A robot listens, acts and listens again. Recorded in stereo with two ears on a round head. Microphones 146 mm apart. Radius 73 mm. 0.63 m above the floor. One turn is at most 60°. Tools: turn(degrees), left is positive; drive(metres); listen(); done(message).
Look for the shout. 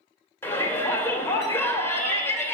turn(degrees=15)
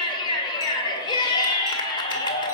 turn(degrees=60)
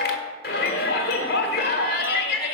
turn(degrees=60)
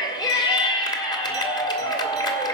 turn(degrees=25)
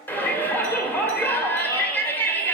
turn(degrees=10)
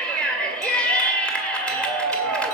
done("Facing the shout, 1 to 2 m away.")